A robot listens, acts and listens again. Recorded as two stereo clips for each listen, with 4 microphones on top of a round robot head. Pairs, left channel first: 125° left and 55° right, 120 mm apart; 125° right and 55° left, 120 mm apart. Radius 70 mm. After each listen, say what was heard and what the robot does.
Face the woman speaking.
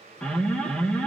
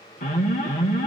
Keep listening.
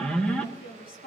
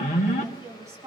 The woman speaking: 125° left. Turn 125° left.
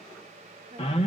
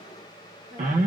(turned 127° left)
Keep listening.
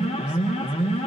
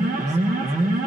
Keep listening.
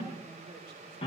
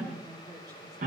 Facing where the woman speaking came from. I can't hear it now.